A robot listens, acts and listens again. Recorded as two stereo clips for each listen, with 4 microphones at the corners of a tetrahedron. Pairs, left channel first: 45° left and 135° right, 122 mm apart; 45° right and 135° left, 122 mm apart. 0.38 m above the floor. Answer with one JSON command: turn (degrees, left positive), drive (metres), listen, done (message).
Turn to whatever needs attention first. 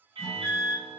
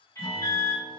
{"turn": -100}
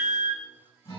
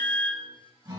{"done": "Facing the alarm."}